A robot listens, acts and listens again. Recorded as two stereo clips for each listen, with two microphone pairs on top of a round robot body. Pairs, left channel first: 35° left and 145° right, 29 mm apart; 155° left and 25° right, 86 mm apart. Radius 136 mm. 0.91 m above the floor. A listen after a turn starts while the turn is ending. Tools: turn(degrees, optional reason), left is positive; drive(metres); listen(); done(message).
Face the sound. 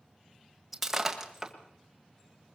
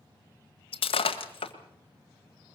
turn(degrees=135, reason="The breaking glass: 135° left.")
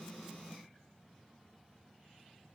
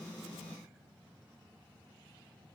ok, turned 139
done("Facing where the breaking glass came from. I can't hear it now.")